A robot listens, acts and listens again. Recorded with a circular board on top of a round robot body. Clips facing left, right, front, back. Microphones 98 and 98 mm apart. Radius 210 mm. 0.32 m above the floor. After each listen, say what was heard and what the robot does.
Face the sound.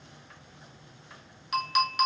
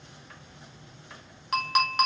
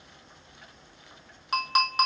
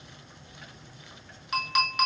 The clink: 50° right. Turn 50° right.
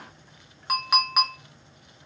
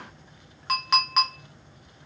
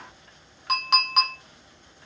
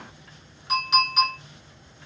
Facing the clink, 1 to 2 m away.